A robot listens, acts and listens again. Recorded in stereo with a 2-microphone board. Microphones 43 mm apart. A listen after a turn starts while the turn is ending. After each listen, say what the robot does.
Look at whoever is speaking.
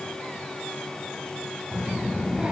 Turn 20° right.
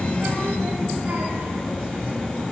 Turn 135° right.
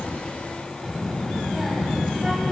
Turn 10° right.
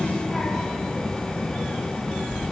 Found it: a child speaking, straight ahead, 1 to 2 m away.